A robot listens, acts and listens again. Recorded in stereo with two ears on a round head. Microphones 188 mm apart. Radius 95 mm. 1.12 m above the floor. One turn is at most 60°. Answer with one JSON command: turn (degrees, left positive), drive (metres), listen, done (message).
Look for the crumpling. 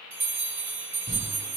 {"turn": 20}
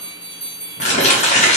{"turn": 60}
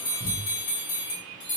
{"turn": 55}
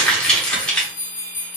{"done": "Found it: crumpling, straight ahead."}